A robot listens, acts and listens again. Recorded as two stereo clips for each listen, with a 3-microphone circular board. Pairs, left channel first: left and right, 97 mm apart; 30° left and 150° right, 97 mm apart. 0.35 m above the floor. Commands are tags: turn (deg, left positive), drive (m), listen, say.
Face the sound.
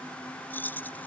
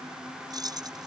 <turn deg="160"/>
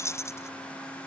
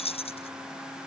<turn deg="30"/>
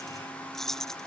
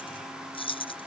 <say>Found it: keys jangling, straight ahead.</say>